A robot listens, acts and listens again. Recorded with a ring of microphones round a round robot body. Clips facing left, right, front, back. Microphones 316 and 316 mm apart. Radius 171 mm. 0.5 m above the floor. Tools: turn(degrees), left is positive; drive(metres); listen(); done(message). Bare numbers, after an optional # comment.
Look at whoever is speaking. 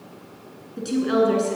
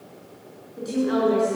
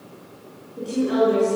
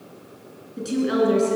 # The woman speaking: 125° left.
turn(125)
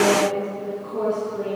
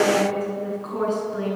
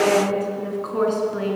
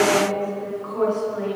# The woman speaking is now 30° right.
turn(-30)
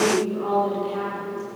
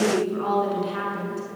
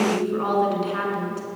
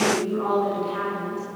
# The woman speaking is now 35° right.
turn(-35)
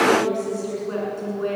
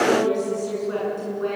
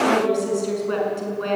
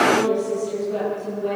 done("Found it: a woman speaking, straight ahead, over 4 m away.")